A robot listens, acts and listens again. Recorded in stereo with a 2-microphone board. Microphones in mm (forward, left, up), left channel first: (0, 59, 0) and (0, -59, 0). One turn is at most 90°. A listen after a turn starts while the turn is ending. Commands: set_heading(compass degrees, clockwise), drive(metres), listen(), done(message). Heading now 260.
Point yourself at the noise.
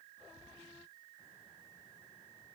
listen()
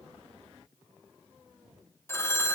set_heading(240)
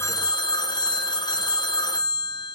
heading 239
set_heading(149)
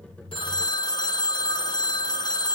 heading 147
set_heading(102)
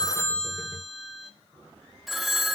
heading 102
done("Facing the phone ringing, under 1 m away.")